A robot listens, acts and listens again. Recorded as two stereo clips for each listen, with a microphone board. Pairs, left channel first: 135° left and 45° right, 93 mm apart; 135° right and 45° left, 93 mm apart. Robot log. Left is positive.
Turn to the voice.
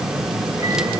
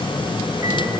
cmd idle
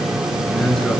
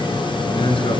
note: The man speaking: 140° right.
cmd yaw -140
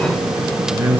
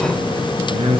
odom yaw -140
note: The man speaking is now 25° left.
cmd yaw +25
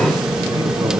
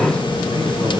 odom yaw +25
end: Found it: a man speaking, straight ahead, over 4 m away.